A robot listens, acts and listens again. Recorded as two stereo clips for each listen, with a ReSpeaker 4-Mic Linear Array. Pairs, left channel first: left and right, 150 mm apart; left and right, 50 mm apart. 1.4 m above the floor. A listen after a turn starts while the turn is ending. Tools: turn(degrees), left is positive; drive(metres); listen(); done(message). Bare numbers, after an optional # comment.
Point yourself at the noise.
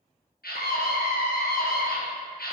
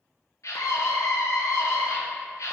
turn(90)
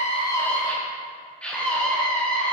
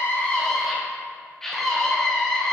done("Facing the scream, 1 to 2 m away.")